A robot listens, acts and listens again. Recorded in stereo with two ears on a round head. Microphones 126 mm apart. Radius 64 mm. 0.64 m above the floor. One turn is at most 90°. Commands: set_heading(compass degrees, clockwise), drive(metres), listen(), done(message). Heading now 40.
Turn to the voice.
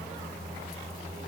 listen()
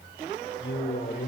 set_heading(330)
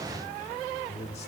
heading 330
set_heading(285)
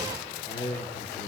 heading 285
set_heading(235)
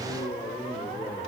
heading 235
set_heading(205)
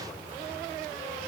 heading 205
listen()
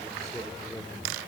done("Found it: a man speaking, straight ahead.")